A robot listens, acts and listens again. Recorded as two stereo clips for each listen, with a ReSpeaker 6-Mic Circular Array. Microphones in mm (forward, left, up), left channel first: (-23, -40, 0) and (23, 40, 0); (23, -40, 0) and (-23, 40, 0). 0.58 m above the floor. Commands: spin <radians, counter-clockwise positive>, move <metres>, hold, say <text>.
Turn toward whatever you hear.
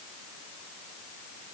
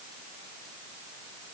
hold
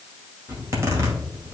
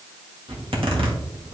spin 2.01
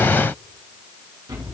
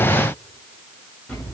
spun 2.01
spin 0.26
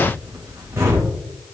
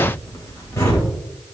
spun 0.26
say Found it: a zipper, straight ahead, 2 to 4 m away.